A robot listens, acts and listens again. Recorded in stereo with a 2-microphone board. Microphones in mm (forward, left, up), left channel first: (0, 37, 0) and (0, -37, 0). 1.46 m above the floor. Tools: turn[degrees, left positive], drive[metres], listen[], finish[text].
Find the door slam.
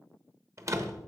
Thought: The door slam: about 45° right or 135° right.
Action: turn[-45]
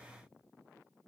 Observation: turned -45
Action: listen[]
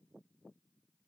Action: finish[I heard a door slam, but can't make it out now. It was about straight ahead or 90° right.]